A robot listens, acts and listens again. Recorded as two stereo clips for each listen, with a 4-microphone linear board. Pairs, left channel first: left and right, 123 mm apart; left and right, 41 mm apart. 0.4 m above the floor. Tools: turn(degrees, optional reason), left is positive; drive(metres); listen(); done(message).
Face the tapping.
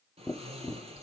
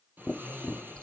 turn(degrees=25, reason="The tapping: about 25° left or 155° left.")
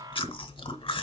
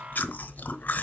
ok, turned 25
done("Facing the tapping.")